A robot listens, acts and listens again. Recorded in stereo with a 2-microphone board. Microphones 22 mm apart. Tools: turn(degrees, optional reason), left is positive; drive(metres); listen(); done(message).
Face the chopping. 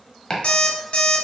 turn(degrees=25, reason="The chopping: about 25° left or 155° left.")
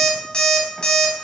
listen()
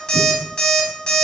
listen()
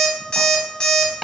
done("Found it: chopping, straight ahead.")